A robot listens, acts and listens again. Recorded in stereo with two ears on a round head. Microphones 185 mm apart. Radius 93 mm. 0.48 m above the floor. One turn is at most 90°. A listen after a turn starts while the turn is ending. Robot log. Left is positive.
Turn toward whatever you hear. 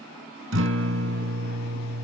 note: The guitar: about 65° right or 115° right.
cmd yaw -65
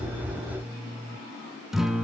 end: Facing the guitar, 1 to 2 m away.